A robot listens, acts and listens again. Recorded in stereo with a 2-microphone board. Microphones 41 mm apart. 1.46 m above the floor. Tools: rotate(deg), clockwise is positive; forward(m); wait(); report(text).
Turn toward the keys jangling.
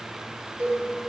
wait()
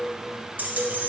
rotate(45)
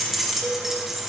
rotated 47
report("Facing the keys jangling, 1 to 2 m away.")